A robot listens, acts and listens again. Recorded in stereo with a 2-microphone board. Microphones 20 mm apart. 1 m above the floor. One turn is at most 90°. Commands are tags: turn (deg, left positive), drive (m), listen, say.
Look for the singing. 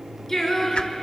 <turn deg="20"/>
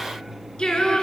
<turn deg="90"/>
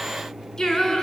<turn deg="30"/>
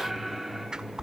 <say>Facing the singing.</say>